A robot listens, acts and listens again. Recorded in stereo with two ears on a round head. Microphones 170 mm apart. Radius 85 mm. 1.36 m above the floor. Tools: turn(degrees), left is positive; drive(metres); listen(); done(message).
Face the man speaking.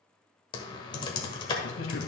turn(degrees=75)
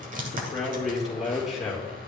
done("Found it: a man speaking, straight ahead, 2 to 4 m away.")